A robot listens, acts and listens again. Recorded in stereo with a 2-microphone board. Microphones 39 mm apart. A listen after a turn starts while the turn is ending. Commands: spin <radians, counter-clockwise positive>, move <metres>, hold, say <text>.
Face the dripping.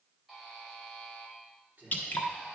spin 0.87
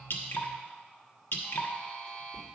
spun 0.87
spin 1.40
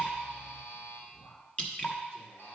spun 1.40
spin 0.52
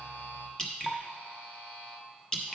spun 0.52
spin 0.26
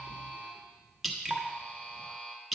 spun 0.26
say Facing the dripping, 1 to 2 m away.